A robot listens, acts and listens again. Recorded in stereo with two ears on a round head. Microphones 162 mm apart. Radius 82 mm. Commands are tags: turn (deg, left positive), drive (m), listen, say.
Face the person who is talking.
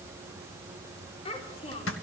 <turn deg="35"/>
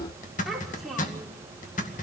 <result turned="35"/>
<say>Found it: a child speaking, straight ahead.</say>